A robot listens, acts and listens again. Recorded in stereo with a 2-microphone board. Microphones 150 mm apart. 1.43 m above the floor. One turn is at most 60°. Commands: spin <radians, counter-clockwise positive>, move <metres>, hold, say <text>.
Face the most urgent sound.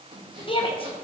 spin 0.61
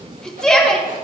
say Found it: a shout, straight ahead.